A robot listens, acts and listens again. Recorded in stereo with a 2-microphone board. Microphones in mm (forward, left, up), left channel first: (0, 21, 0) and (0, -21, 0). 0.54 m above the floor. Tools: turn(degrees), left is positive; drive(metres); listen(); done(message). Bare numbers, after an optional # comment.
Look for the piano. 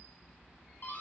listen()
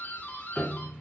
# The piano: about 20° left or 160° left.
turn(20)
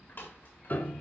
# So it is at 140° left.
turn(140)
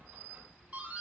listen()
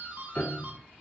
# The piano is now 35° left.
turn(35)
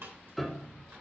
done("Facing the piano.")